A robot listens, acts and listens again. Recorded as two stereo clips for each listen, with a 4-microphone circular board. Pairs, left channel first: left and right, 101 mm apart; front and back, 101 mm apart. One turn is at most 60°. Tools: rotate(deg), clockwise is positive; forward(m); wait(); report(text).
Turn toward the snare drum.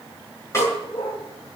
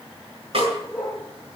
rotate(-60)
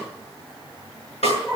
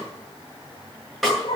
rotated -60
rotate(-60)
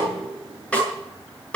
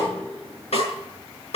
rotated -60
rotate(-10)
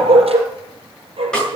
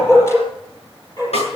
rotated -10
report("Found it: a snare drum, straight ahead.")